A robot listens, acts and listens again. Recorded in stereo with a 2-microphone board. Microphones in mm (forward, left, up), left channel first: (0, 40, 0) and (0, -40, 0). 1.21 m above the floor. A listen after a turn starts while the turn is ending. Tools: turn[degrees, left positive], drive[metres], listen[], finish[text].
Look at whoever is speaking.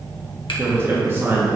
Thought: The man speaking: about 25° right or 155° right.
Action: turn[-25]
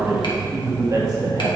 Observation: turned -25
Thought: So it is at 125° right.
Action: turn[-125]
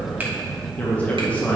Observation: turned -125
Thought: The man speaking is now 20° left.
Action: turn[20]
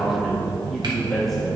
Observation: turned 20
Action: finish[Facing the man speaking, 1 to 2 m away.]